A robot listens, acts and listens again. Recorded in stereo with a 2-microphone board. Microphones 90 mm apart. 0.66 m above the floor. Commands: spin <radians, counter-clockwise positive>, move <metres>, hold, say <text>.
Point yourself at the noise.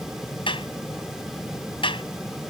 spin 1.22
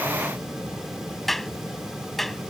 say Facing the clap.